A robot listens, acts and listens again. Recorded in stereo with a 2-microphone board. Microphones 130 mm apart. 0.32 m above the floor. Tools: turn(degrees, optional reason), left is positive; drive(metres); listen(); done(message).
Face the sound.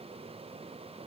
listen()
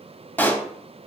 turn(degrees=30)
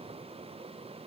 listen()
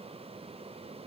done("I heard a pop, but can't make it out now. It was about 15° right or 135° left.")